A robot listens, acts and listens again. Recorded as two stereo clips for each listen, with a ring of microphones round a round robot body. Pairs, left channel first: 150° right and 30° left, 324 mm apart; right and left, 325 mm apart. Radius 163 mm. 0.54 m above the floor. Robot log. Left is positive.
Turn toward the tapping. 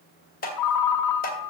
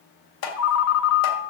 note: The tapping: 90° right.
cmd yaw -90
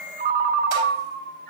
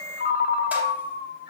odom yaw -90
cmd idle
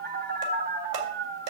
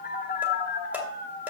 end: Facing the tapping.